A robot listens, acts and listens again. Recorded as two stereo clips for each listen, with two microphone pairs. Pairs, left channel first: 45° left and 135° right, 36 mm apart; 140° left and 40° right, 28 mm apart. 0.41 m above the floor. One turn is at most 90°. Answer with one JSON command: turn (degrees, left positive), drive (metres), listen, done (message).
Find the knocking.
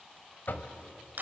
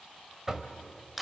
{"turn": 35}
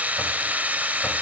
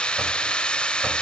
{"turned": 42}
{"turn": -10}
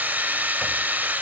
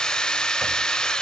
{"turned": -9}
{"listen": true}
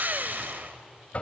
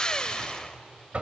{"done": "Facing the knocking, 1 to 2 m away."}